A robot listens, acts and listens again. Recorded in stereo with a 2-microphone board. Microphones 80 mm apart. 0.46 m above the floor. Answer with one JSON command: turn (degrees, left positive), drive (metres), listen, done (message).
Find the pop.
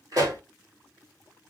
{"turn": -55}
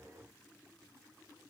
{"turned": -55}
{"listen": true}
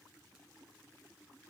{"done": "I heard a pop, but can't make it out now. It was about straight ahead or 70° right."}